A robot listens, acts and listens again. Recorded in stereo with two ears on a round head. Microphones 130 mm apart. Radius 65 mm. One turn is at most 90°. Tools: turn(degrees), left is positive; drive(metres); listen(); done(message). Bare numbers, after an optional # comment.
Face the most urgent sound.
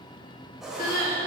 # The crying: about 65° left or 115° left.
turn(65)
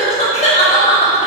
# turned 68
# So it is at 45° left.
turn(45)
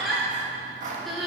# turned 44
done("Facing the crying.")